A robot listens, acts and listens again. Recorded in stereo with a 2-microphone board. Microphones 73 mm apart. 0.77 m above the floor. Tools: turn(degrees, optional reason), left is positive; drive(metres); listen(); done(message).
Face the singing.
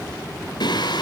turn(degrees=90)
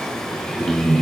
done("Facing the singing.")